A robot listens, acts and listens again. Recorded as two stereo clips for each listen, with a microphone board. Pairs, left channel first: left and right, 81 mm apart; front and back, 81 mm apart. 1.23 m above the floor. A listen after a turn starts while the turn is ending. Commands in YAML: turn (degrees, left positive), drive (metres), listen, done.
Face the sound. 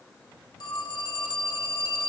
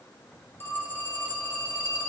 turn: 65
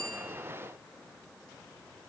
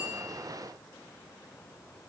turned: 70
listen: true
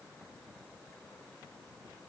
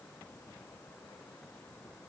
listen: true
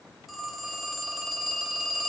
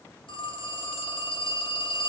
done: "Facing the phone ringing."